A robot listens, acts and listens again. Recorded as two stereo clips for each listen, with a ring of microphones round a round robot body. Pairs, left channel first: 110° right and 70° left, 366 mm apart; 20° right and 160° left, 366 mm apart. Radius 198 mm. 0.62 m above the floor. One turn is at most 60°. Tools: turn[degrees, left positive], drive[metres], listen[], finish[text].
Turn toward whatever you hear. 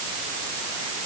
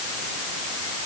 Action: listen[]
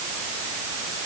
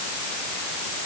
Action: listen[]
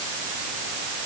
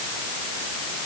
Action: finish[I can't make out anything to turn to.]